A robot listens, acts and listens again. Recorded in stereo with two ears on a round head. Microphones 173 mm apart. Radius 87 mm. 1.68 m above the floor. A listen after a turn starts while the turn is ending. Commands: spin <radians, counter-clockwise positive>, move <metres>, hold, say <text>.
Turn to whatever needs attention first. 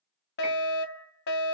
spin 1.05
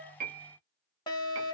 spin 0.44
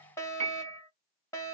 spin 0.26
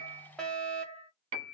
say Facing the fire alarm.